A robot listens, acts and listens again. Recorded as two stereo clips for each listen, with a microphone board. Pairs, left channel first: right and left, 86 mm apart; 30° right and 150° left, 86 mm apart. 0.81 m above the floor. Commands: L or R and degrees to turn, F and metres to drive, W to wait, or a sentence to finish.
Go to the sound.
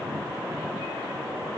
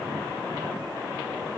W
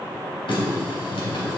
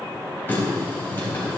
R95
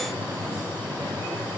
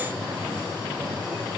R25
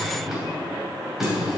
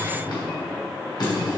F1.0
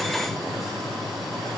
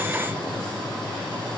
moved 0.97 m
F1.0
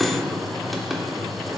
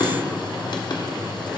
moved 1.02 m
F1.0
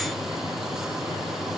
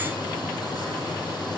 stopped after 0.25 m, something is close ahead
Arrived at the running tap, straight ahead.